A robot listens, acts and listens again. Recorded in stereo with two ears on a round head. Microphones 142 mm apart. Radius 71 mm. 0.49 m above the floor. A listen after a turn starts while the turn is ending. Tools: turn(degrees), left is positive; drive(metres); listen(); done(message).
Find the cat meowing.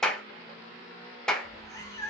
turn(degrees=15)
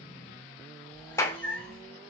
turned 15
turn(degrees=30)
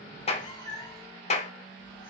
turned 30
turn(degrees=30)
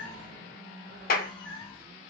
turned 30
turn(degrees=145)
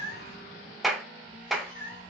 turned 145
turn(degrees=50)
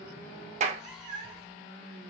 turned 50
done("Found it: a cat meowing, straight ahead.")